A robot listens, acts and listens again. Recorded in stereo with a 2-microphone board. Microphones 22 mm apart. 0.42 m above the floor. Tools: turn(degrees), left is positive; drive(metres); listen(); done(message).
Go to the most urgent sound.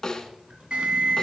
turn(degrees=-55)
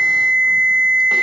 turn(degrees=-65)
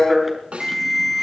turn(degrees=-10)
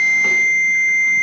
drive(metres=1.0)
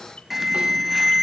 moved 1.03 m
turn(degrees=-10)
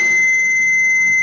drive(metres=1.0)
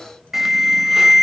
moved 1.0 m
turn(degrees=-20)
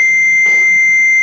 drive(metres=1.0)
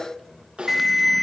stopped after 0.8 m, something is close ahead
done("I am next to the alarm.")